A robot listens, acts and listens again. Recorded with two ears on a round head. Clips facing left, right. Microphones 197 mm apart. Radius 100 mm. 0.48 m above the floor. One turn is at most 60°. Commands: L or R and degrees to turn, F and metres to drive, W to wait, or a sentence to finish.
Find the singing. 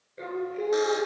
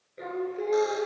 L30
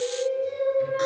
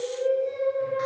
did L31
L60
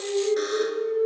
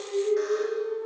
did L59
L60
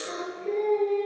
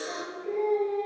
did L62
L40
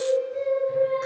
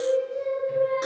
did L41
Facing the singing.